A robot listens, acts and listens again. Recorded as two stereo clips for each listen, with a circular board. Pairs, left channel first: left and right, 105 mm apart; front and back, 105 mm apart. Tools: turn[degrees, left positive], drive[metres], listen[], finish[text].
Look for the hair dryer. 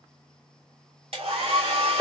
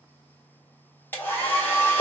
Thought: The hair dryer: 70° right.
Action: turn[-70]
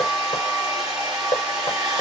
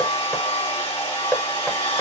Action: finish[Found it: a hair dryer, straight ahead, 1 to 2 m away.]